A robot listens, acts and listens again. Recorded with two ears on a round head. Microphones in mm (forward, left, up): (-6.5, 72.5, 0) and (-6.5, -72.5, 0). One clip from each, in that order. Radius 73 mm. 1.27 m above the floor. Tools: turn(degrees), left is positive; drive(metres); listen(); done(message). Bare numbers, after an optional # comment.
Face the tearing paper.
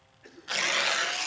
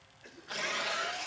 # The tearing paper: about 60° left or 120° left.
turn(60)
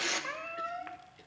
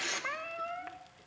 done("Facing the tearing paper.")